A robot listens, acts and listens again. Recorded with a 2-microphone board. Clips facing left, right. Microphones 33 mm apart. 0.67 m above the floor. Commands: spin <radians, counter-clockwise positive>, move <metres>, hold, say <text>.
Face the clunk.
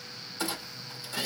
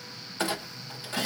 spin -0.87
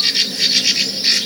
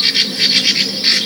hold
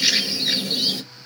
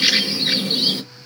say I heard a clunk, but can't make it out now. It was about straight ahead or 80° right.